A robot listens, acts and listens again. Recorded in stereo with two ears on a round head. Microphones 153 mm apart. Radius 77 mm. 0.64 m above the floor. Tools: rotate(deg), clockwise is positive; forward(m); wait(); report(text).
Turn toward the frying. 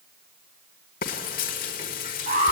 rotate(-50)
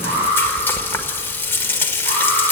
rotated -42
rotate(-15)
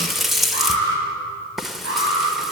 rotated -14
report("Facing the frying.")